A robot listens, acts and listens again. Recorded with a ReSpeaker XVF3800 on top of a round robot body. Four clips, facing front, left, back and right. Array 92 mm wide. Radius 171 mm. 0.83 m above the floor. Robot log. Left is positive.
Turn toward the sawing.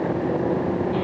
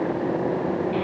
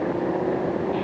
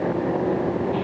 cmd idle
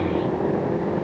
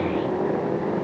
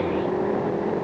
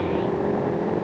cmd idle
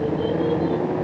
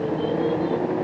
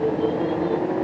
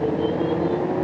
end: I can't make out sawing to turn to.